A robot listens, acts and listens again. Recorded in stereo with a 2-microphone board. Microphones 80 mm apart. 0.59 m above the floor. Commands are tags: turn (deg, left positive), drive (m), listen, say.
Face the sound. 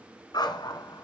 <turn deg="60"/>
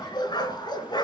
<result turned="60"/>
<turn deg="65"/>
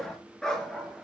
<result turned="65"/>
<turn deg="10"/>
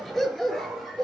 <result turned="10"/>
<say>Facing the dog barking.</say>